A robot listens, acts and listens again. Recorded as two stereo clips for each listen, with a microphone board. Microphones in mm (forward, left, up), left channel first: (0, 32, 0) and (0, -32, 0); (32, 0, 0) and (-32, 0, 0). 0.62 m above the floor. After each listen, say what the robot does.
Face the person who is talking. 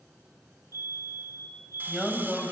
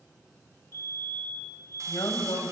Found it: a man speaking, straight ahead, over 4 m away.